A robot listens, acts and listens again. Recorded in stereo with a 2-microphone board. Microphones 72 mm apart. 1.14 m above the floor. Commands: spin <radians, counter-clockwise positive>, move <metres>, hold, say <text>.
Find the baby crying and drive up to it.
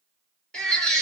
spin 0.52
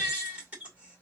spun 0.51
spin -0.35
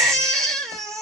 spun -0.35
move 1.0
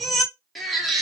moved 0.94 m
move 1.0
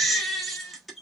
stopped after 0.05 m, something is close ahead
say I am next to the baby crying.